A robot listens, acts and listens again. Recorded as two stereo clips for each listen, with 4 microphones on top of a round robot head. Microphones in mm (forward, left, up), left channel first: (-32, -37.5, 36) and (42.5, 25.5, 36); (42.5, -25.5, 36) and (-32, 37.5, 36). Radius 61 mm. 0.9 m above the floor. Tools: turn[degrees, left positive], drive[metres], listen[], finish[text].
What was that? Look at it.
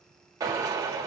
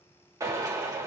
Thought: The drill: 90° left.
Action: turn[90]
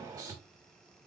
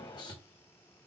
Action: finish[Facing the drill, 1 to 2 m away.]